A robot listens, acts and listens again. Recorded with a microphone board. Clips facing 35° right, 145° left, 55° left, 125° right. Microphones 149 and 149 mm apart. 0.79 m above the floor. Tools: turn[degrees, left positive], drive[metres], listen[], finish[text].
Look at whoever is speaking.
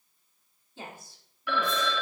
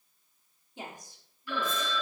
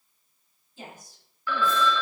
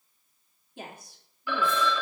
Thought: The woman speaking: 145° right.
Action: turn[-145]
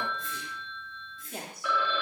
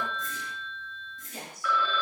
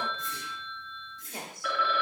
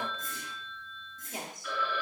Thought: The woman speaking is now 55° right.
Action: turn[-55]
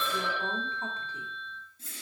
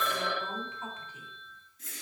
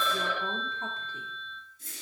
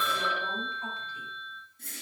Action: listen[]
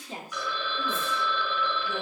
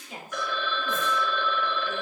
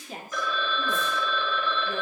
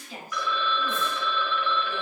Thought: The woman speaking is now 20° left.
Action: turn[20]
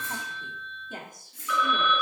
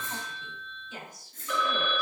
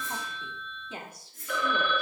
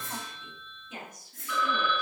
Action: finish[Found it: a woman speaking, straight ahead, 1 to 2 m away.]